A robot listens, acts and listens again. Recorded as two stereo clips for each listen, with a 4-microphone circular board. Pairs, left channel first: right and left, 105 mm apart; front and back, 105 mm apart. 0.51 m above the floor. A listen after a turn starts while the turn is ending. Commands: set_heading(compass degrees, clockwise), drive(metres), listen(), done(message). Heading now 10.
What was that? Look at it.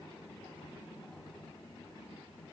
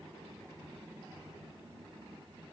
listen()
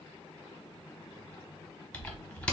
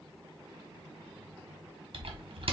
set_heading(180)
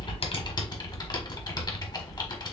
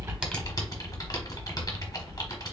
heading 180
set_heading(230)
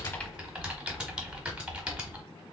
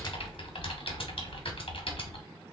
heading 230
set_heading(220)
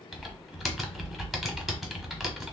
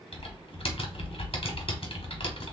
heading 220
done("Found it: typing on a keyboard, straight ahead, 1 to 2 m away.")